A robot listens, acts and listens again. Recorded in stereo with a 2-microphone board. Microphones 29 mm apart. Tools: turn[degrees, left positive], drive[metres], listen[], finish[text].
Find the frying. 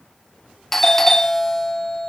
Action: listen[]
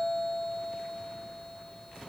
Action: listen[]
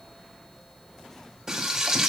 Thought: The frying: about 20° right or 160° right.
Action: turn[-20]
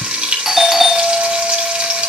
Thought: So it is at 140° right.
Action: turn[-140]
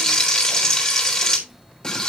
Thought: The frying is now 25° left.
Action: turn[25]
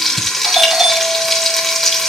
Action: finish[Found it: frying, straight ahead, 2 to 4 m away.]